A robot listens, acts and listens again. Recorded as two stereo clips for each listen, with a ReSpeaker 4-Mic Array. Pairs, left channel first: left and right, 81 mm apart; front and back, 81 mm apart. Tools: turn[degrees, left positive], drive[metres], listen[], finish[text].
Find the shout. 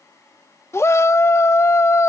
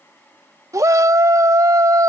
Thought: The shout: 135° left.
Action: turn[135]
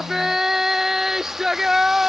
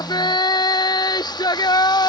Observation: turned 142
Action: finish[Facing the shout.]